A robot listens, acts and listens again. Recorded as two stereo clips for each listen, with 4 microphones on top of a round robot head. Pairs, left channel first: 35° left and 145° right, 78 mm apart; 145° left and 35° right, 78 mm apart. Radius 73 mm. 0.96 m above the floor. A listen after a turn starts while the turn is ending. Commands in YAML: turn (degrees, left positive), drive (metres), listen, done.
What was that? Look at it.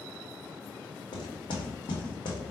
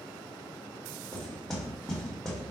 turn: 60
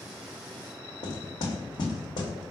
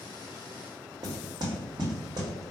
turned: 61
done: "Found it: knocking, straight ahead."